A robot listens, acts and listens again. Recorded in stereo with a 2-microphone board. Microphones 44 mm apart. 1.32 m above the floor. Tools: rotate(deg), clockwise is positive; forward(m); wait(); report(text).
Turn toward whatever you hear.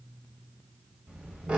rotate(25)
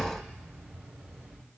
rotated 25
rotate(120)
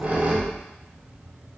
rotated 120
rotate(30)
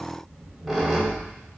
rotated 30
report("Facing the squeak.")